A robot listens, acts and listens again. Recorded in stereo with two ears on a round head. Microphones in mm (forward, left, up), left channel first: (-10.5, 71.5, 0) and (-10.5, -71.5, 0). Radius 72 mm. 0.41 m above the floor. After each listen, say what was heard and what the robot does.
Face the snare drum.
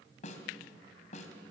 The snare drum: about 45° left or 135° left. Turn 45° left.
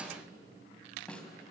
Facing the snare drum, 2 to 4 m away.